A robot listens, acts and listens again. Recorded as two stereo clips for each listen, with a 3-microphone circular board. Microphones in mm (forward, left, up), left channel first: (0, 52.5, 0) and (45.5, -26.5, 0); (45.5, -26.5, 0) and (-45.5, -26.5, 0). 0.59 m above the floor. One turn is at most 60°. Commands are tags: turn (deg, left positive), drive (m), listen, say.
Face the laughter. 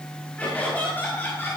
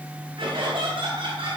<turn deg="-60"/>
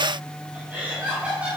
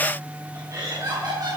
<turn deg="-60"/>
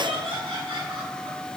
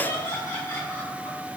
<turn deg="-55"/>
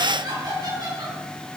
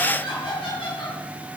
<turn deg="-20"/>
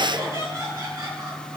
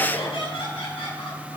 <say>Found it: laughter, straight ahead, over 4 m away.</say>